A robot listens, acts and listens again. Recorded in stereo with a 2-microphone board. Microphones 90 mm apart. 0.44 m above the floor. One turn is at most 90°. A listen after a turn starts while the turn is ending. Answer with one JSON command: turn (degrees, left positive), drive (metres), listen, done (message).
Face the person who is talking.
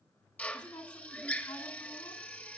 {"turn": 55}
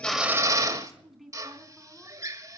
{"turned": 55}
{"done": "Facing the woman speaking."}